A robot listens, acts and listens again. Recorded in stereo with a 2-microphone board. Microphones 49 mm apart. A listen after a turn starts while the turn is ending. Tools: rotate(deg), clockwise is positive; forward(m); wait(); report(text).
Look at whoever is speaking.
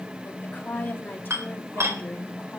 rotate(-45)
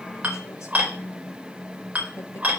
wait()
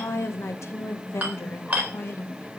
rotate(-55)
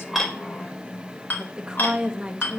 rotate(15)
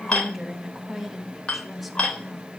report("Found it: a woman speaking, straight ahead.")